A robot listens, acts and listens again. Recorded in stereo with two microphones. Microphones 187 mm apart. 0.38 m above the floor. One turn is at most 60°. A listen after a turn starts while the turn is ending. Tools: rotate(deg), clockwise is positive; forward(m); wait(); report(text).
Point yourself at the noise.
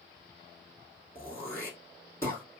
rotate(-30)
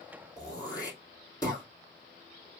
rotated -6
rotate(-20)
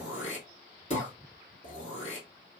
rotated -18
rotate(-60)
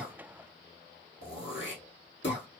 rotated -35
rotate(-60)
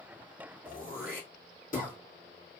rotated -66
rotate(-45)
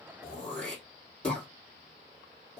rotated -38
report("Found it: throat clearing, straight ahead, 1 to 2 m away.")